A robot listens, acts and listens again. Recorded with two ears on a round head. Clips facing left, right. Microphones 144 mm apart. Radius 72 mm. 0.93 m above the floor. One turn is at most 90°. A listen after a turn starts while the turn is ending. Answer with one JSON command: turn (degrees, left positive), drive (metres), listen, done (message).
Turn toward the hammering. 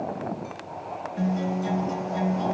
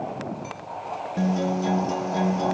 {"listen": true}
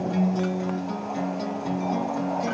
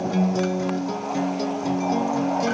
{"listen": true}
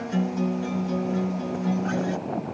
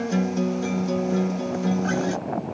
{"done": "I can't make out hammering, only a guitar."}